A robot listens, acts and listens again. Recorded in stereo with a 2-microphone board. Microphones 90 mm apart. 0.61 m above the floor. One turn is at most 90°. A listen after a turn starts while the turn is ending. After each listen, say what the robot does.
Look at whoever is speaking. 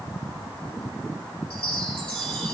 Keep listening.
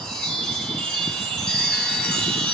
Keep listening.
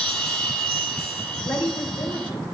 Turn 60° left.
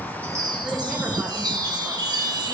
Keep listening.
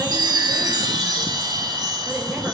Keep listening.
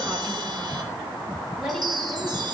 I heard a woman speaking, but can't make it out now. It was about straight ahead or 60° left.